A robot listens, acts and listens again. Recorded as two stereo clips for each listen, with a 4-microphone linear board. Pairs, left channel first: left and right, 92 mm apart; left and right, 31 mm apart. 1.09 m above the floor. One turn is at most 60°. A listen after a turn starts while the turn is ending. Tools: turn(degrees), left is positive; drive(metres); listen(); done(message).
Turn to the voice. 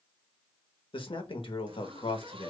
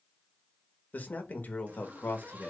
turn(degrees=60)
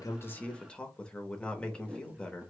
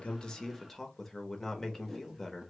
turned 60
turn(degrees=10)
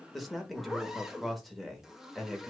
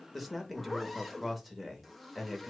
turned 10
done("Facing the man speaking.")